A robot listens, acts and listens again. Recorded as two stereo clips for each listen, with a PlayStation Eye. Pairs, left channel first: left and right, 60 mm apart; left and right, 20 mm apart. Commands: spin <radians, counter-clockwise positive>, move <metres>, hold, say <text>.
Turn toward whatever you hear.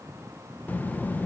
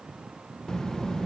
spin 0.52
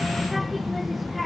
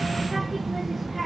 say Facing the child speaking.